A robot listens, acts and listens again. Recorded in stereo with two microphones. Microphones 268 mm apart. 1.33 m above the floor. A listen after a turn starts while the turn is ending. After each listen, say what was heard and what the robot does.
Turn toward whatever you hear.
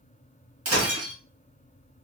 The breaking glass: about 60° right or 120° right. Turn 60° right.
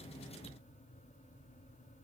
Keep listening.
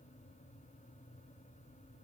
I heard breaking glass, but can't make it out now. It was about straight ahead or 60° right.